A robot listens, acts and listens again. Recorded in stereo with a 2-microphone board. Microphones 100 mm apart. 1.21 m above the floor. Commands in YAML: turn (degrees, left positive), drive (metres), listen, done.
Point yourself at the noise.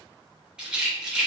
turn: -30
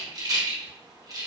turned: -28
turn: -140
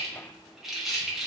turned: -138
done: "Facing the rattle."